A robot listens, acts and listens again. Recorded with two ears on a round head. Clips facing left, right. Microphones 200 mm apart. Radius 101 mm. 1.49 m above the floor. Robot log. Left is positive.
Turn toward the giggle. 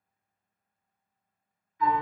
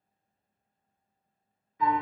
cmd idle
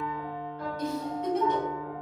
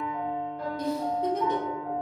note: The giggle: about 30° right or 150° right.
cmd yaw -30
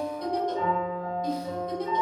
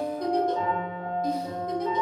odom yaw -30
end: Facing the giggle, 1 to 2 m away.